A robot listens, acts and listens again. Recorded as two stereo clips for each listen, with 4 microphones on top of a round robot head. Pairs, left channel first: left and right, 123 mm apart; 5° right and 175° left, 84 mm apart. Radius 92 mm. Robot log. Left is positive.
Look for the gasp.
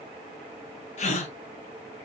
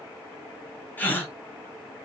note: The gasp: 65° left.
cmd yaw +65
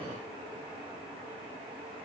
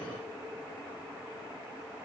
end: Facing where the gasp came from. I can't hear it now.